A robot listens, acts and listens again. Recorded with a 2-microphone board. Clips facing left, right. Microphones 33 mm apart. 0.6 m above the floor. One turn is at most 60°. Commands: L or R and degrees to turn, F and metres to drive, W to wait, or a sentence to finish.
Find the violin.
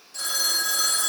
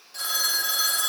W
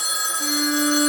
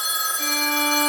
R60
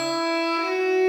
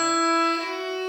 R30
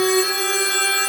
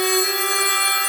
R10
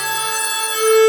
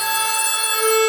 Found it: a violin, straight ahead.